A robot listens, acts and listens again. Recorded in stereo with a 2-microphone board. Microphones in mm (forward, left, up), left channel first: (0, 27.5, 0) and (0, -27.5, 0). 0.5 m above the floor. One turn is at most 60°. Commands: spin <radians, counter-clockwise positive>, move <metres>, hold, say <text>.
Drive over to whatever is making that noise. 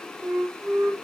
spin -1.05
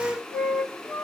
move 1.0
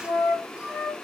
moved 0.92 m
move 1.0
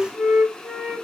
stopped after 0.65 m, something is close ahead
spin -0.17
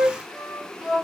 say Arrived at the flute, straight ahead.